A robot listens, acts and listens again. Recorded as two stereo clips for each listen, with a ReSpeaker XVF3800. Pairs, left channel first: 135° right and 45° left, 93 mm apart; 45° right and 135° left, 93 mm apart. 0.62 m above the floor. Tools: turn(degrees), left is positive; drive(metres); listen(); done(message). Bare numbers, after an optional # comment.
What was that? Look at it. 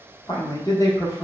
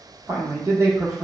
# The man speaking: 170° right.
turn(-170)
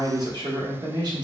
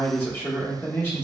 # The man speaking is now 20° left.
turn(20)
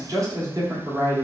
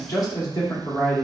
done("Facing the man speaking.")